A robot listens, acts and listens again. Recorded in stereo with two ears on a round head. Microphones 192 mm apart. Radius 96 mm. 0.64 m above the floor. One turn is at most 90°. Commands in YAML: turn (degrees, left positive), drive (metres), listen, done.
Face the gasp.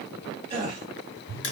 turn: -30
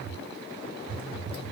listen: true
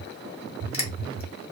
done: "I heard a gasp, but can't make it out now. It was about straight ahead or 120° right."